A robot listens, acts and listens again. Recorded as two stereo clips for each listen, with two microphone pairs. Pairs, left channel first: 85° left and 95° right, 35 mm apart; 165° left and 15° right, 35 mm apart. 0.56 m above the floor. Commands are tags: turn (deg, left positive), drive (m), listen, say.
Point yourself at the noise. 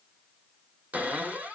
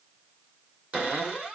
<turn deg="-75"/>
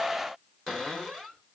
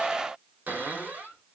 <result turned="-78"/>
<say>Found it: a cupboard door, straight ahead.</say>